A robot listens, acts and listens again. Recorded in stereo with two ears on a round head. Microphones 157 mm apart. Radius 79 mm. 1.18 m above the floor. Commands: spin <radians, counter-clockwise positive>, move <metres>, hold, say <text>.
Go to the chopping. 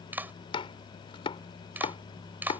spin 0.52
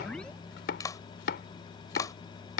spin 2.01
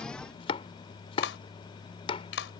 spin 0.52
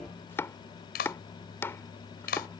spin 0.26
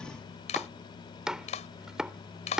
move 1.0
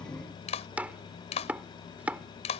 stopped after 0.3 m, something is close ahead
spin -0.17
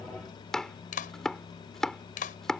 say Blocked. The chopping is further on, straight ahead.